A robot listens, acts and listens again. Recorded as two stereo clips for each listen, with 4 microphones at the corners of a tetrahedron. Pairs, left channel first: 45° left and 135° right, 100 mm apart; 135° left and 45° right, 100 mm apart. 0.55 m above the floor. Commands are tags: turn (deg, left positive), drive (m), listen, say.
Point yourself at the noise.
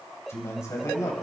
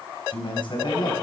<turn deg="100"/>
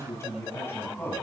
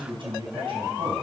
<turn deg="-20"/>
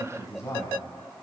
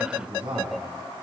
<turn deg="-15"/>
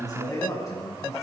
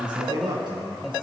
<turn deg="-10"/>
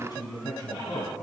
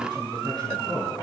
<say>Facing the man speaking, over 4 m away.</say>